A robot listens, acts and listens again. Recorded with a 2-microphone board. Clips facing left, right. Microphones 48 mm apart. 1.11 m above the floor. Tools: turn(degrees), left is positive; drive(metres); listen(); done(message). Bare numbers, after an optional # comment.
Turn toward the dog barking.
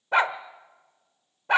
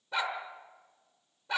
# The dog barking: about 55° left or 125° left.
turn(55)
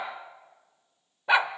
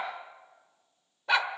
# So it is at 20° left.
turn(20)
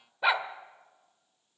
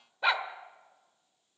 done("Facing the dog barking, 1 to 2 m away.")